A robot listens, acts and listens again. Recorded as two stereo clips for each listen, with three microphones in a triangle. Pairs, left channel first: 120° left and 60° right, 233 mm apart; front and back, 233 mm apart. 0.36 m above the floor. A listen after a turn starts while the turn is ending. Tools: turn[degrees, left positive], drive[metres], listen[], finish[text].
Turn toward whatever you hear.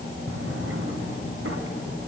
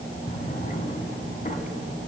Thought: The drawer: 55° right.
Action: turn[-55]
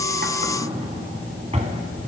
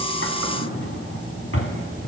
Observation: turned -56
Action: finish[Found it: a drawer, straight ahead.]